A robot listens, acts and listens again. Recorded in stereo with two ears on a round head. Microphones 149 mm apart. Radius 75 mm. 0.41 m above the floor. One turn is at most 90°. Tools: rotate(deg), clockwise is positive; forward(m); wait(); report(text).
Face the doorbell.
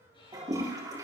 wait()
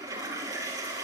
wait()
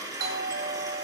rotate(60)
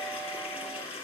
wait()
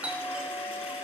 rotate(10)
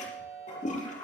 report("Facing the doorbell.")